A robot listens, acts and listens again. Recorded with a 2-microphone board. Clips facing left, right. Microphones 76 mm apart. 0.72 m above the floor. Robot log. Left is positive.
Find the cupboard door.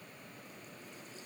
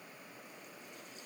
cmd idle
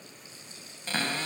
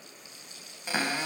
cmd yaw -30
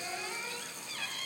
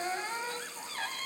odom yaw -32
note: So it is at 135° right.
cmd yaw -135
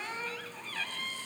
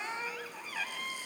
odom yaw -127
note: The cupboard door is now 10° right.
cmd yaw -10
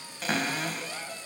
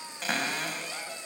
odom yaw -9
end: Facing the cupboard door.